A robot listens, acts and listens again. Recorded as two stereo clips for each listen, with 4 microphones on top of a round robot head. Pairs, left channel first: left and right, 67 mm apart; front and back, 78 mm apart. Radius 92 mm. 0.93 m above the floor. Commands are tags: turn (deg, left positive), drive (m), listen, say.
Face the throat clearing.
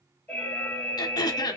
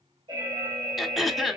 <turn deg="90"/>
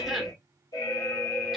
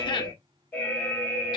<listen/>
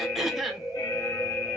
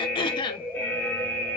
<say>Found it: throat clearing, straight ahead, under 1 m away.</say>